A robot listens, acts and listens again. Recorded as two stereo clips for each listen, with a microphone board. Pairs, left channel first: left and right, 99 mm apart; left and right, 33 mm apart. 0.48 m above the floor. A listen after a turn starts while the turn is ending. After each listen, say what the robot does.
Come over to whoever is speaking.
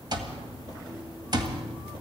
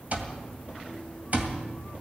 Keep listening.
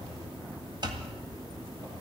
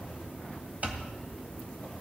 Keep listening.
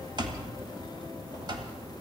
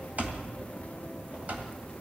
I can't make out anyone speaking to turn to.